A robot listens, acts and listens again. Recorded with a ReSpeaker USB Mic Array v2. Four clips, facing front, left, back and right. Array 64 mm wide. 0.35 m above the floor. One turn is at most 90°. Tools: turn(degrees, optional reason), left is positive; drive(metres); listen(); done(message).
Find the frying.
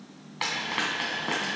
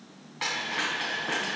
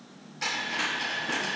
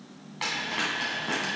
done("Found it: frying, straight ahead, 2 to 4 m away.")